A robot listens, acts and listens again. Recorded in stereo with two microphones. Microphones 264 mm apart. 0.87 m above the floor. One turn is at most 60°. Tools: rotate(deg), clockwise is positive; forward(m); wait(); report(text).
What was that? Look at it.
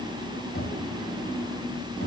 rotate(-50)
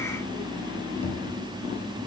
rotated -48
rotate(-60)
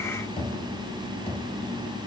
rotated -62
rotate(-20)
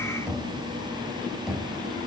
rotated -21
report("Found it: knocking, straight ahead.")